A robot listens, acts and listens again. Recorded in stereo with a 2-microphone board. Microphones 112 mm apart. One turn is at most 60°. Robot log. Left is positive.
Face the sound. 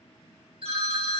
note: The phone ringing: about 60° right or 120° right.
cmd yaw -60
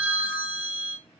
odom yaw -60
note: So it is at 20° right.
cmd yaw -20
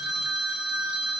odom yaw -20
end: Found it: a phone ringing, straight ahead, under 1 m away.